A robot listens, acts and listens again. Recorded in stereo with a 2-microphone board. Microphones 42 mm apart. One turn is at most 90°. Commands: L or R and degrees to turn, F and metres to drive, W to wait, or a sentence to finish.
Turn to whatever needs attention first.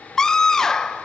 L30
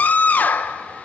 L90
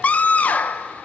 L40
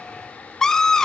L15
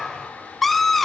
Found it: a scream, straight ahead.